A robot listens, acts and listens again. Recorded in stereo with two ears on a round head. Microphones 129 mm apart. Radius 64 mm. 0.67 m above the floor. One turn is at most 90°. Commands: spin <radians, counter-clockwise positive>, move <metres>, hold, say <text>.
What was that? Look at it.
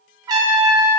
spin -0.44
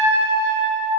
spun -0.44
spin -1.57
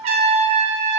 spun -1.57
spin -0.87
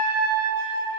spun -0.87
spin -0.35
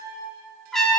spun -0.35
say Facing the trumpet, under 1 m away.